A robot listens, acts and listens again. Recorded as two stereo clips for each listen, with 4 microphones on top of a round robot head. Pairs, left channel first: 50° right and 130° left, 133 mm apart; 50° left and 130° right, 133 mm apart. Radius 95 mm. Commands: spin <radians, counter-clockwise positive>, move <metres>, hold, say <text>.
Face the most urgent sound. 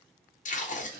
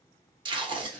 hold
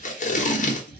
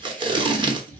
hold
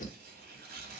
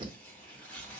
say I can't make out anything urgent, only tape being pulled and tearing paper.